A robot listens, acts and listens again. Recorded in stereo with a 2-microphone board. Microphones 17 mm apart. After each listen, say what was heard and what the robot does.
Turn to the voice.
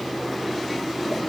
Keep listening.
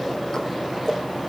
Keep listening.
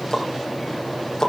I can't make out anyone speaking to turn to.